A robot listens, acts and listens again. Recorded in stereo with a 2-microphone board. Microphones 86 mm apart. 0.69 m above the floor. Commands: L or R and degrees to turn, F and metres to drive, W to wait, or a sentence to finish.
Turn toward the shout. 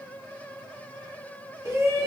R35
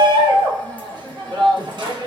R105
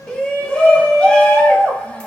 L15
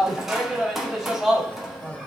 Found it: a shout, straight ahead, 1 to 2 m away.